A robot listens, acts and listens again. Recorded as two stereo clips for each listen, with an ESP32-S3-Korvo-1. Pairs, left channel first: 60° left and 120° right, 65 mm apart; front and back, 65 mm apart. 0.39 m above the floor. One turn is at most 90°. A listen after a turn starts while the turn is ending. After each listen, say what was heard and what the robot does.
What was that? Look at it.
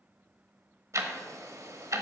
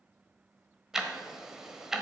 The ticking: 100° right. Turn 90° right.
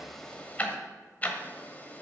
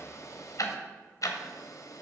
Found it: ticking, straight ahead.